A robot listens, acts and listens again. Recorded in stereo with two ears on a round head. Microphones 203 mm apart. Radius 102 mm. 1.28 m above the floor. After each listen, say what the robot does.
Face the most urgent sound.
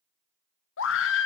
Turn 60° left.
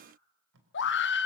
Turn 55° left.
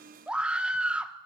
Found it: a scream, straight ahead, 1 to 2 m away.